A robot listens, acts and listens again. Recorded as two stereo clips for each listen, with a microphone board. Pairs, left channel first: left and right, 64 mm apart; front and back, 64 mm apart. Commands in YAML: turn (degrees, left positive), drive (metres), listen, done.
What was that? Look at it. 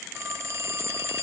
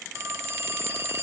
turn: -135
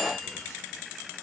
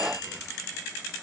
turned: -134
listen: true
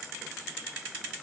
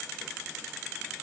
listen: true
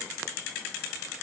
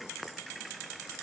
done: "Facing where the phone ringing came from. I can't hear it now."